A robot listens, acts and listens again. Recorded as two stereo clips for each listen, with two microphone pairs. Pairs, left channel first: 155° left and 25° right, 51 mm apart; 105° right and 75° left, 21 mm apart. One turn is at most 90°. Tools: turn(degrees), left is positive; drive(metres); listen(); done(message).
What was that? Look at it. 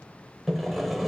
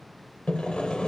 turn(degrees=-90)
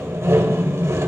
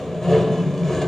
turn(degrees=-40)
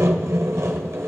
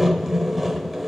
turn(degrees=-10)
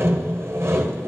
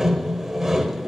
done("Found it: sawing, straight ahead.")